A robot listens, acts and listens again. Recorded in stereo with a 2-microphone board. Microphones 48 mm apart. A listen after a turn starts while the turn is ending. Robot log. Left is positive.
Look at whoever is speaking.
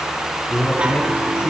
note: The man speaking: about 55° left or 125° left.
cmd yaw +55
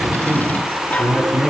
end: Facing the man speaking.